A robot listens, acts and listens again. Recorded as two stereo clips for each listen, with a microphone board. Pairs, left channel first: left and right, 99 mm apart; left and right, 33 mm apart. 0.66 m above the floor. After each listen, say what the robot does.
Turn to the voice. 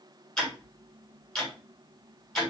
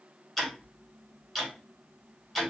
Keep listening.
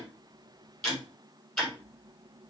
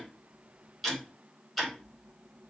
Keep listening.
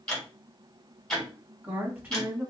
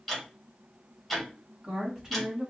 Turn 30° right.
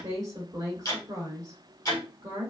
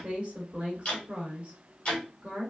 Turn 140° right.
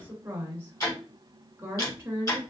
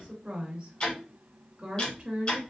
Turn 25° right.
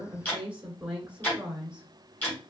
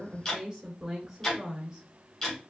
Turn 10° right.
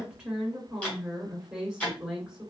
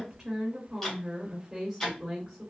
Facing the woman speaking, 1 to 2 m away.